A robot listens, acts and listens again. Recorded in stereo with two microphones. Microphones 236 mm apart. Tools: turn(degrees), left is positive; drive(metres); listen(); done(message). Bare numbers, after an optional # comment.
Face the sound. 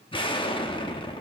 # The explosion: about 20° left or 160° left.
turn(20)
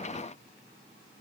listen()
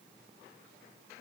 done("I heard an explosion, but can't make it out now. It was about straight ahead or 140° left.")